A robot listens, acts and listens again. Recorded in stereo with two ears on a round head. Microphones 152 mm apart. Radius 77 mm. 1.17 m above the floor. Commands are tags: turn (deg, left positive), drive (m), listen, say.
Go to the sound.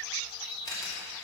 <turn deg="20"/>
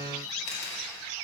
<turn deg="140"/>
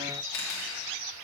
<turn deg="60"/>
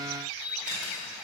<drive m="1.0"/>
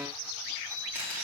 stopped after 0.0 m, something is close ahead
<turn deg="-10"/>
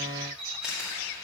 <say>Blocked. The camera shutter is further on, straight ahead.</say>